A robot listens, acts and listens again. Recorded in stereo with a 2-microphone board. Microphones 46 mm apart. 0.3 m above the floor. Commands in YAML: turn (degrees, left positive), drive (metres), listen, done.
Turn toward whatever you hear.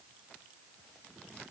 listen: true
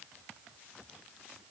listen: true
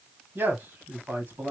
turn: -45
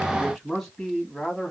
turn: 10
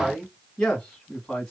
turn: 15
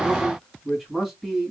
done: "Facing the man speaking, 1 to 2 m away."